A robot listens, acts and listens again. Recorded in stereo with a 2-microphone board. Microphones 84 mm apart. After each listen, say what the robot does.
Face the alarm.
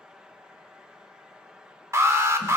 Turn 35° right.
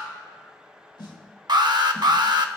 Turn 105° right.
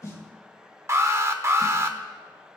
Turn 40° right.
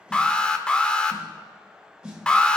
Turn 15° left.
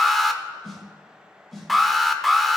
Facing the alarm, under 1 m away.